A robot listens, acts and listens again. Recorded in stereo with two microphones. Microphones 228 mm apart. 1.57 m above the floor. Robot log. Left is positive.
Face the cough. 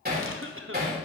note: The cough: about 60° right or 120° right.
cmd yaw -60
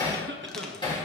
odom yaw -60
note: So it is at 55° right.
cmd yaw -55
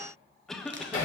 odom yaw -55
end: Found it: a cough, straight ahead, 1 to 2 m away.